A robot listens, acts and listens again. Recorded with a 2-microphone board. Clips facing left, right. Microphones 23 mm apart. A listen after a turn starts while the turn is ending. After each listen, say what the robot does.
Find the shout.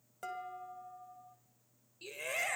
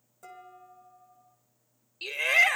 Turn 60° right.
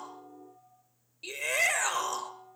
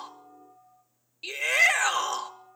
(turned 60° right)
Turn 20° right.
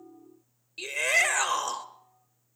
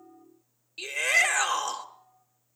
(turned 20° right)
Facing the shout, 1 to 2 m away.